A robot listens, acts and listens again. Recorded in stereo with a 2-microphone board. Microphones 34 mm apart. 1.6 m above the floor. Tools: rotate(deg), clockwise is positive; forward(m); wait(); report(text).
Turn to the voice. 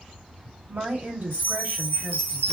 rotate(60)
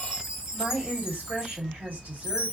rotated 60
rotate(60)
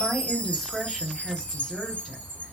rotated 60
rotate(-10)
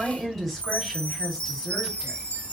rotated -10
report("Facing the woman speaking.")